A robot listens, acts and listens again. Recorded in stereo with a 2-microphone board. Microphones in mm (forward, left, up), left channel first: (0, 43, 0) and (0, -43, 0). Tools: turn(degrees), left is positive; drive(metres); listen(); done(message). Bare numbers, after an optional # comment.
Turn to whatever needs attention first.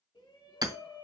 # The shout: about 70° left or 110° left.
turn(70)
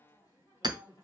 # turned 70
# So it is at 35° left.
turn(35)
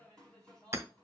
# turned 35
# The shout is now 15° left.
turn(15)
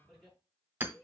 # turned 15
done("Found it: a shout, straight ahead.")